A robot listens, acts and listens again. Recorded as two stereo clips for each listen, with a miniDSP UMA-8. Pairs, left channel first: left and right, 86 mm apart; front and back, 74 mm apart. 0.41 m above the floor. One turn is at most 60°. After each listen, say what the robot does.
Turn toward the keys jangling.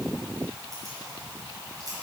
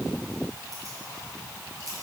Turn 60° right.
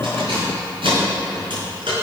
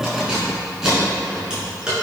Turn 60° right.
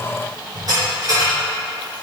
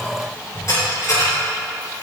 Turn 50° right.
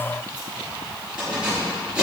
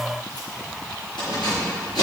Turn 15° right.
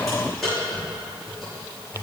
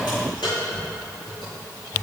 Found it: keys jangling, straight ahead, over 4 m away.